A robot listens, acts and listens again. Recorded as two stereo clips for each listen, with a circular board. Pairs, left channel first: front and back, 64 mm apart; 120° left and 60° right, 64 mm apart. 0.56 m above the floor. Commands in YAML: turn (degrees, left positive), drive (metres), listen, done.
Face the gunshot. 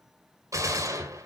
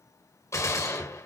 turn: 155
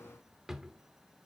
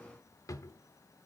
done: "Facing where the gunshot came from. I can't hear it now."